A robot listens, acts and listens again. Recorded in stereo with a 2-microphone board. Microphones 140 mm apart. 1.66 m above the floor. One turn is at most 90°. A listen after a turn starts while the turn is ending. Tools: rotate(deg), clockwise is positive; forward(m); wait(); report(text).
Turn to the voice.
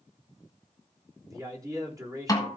rotate(25)
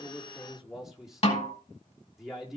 report("Found it: a man speaking, straight ahead, 2 to 4 m away.")